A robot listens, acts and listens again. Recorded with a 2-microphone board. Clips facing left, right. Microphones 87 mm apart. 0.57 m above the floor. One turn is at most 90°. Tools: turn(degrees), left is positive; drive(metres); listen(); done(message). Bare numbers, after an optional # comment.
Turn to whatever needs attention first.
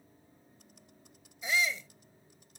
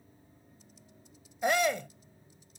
# The shout: about 65° right or 115° right.
turn(-65)
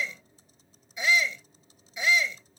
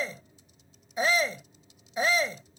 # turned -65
# So it is at 45° right.
turn(-45)
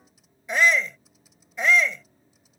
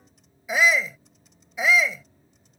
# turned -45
done("Facing the shout.")